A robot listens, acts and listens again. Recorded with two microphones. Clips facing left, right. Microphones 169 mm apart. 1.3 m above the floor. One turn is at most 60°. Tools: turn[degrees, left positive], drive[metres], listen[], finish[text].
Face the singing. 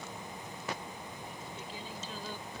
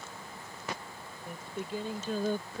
Thought: The singing: about 55° right or 125° right.
Action: turn[-55]
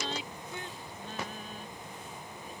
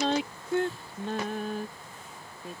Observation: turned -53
Thought: So it is at 75° right.
Action: turn[-60]
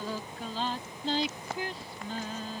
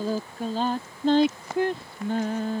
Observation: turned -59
Thought: The singing is now 55° right.
Action: turn[-55]
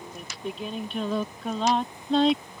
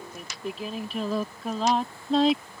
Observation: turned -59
Action: finish[Facing the singing.]